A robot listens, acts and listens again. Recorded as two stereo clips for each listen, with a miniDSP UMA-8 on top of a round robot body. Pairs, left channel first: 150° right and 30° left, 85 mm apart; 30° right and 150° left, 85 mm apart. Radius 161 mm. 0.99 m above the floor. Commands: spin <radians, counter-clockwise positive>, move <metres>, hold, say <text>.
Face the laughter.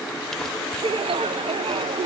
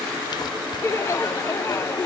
spin 0.52
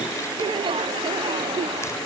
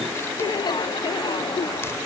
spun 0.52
spin 0.17
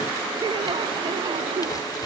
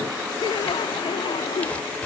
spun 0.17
say Found it: laughter, straight ahead.